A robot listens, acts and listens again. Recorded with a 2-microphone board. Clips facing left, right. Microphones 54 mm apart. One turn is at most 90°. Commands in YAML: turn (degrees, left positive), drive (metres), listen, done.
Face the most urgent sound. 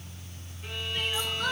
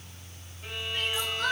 turn: -50
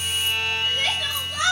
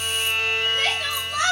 turn: -75
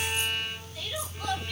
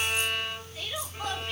turn: -30
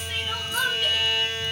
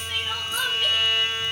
done: "Found it: crying, straight ahead."